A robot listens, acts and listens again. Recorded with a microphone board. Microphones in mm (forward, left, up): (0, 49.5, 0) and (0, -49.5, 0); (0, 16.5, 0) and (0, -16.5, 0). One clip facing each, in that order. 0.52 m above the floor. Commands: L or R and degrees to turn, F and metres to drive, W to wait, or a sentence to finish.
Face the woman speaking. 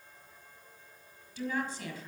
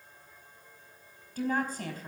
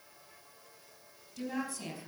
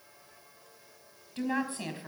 R45
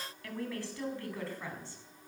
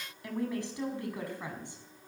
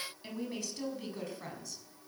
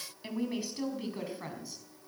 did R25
R15
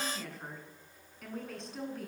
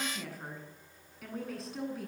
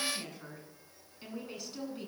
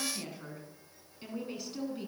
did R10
Facing the woman speaking, over 4 m away.